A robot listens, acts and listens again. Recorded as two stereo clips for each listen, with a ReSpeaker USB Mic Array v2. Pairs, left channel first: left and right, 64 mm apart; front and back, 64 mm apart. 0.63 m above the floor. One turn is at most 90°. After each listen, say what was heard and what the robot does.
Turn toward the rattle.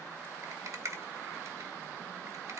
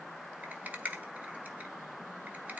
The rattle: 120° right. Turn 90° right.
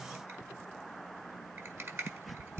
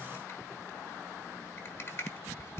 The rattle is now 45° right. Turn 45° right.
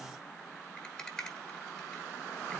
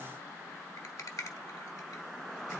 The rattle is now 10° left. Turn 10° left.
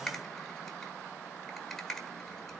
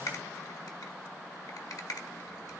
Found it: a rattle, straight ahead, 1 to 2 m away.